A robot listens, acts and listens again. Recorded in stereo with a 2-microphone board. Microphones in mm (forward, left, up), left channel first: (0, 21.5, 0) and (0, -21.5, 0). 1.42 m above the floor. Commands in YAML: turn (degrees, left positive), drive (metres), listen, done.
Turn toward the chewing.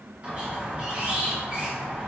listen: true
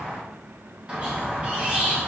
listen: true
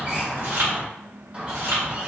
turn: -60
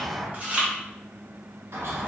turn: -35
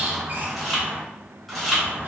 done: "Facing the chewing."